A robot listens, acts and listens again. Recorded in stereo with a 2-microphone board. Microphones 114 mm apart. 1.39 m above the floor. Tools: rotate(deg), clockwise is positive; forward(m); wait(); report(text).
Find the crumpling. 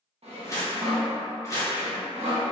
rotate(-30)
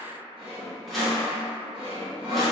wait()
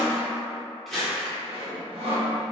report("Found it: crumpling, straight ahead, 1 to 2 m away.")